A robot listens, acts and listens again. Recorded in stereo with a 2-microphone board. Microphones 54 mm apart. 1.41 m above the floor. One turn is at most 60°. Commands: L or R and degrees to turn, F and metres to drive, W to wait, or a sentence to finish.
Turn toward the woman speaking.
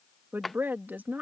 R35
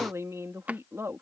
R60
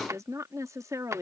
R60
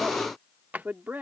R35
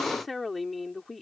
Facing the woman speaking.